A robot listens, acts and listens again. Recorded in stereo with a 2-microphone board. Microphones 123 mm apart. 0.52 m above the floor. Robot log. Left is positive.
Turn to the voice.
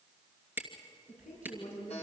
cmd yaw +90
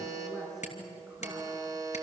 end: Found it: a woman speaking, straight ahead, over 4 m away.